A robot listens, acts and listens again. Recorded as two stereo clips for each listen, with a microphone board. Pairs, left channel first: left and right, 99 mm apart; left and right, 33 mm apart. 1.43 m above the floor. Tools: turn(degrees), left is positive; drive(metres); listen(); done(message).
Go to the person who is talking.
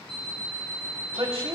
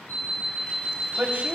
turn(degrees=-70)
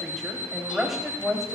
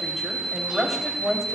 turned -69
drive(metres=1.0)
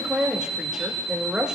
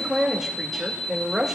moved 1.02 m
turn(degrees=-10)
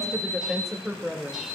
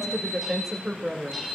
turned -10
drive(metres=1.0)
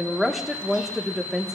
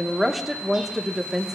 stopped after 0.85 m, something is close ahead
done("I am next to the woman speaking.")